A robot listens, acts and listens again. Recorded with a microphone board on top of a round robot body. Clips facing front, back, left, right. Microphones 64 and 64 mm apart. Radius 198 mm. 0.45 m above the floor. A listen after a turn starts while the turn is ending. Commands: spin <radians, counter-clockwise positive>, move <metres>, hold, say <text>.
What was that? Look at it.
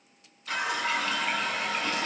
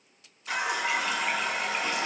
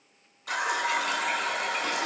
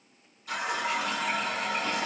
spin 1.92
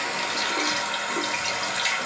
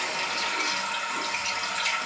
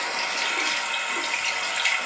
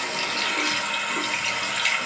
say Facing the running tap, 1 to 2 m away.